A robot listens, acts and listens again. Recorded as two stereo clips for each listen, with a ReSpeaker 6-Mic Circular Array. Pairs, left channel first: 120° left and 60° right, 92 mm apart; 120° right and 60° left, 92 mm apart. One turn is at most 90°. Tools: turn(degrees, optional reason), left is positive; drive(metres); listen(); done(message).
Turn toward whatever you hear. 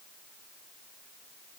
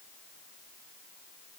listen()
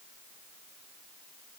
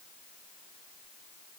listen()
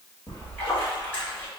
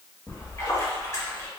turn(degrees=-90, reason="The splash: 170° right.")
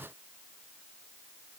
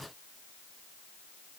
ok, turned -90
turn(degrees=-80, reason="Nothing new. It was at 80° right.")
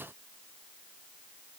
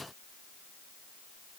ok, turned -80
done("Facing where the splash came from. I can't hear it now.")